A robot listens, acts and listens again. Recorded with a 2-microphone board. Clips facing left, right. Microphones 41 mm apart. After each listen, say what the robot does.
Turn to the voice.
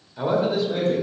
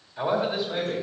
Turn 30° right.
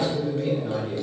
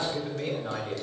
Turn 145° right.
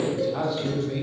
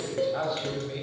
Turn 15° right.
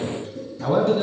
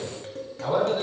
Found it: a man speaking, straight ahead, 2 to 4 m away.